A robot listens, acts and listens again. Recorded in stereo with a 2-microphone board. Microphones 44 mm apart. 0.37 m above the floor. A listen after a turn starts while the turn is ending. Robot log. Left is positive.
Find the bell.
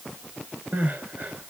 cmd idle
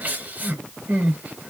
cmd idle
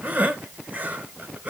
end: I can't make out a bell, only crying.